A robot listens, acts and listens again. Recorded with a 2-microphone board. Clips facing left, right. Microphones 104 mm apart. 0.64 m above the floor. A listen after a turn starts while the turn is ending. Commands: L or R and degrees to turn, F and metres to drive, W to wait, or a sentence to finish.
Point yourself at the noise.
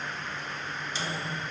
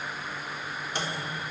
R60
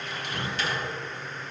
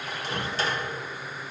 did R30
R40
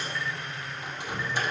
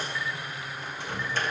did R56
L15
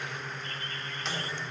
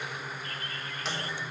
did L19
Found it: a microwave, straight ahead.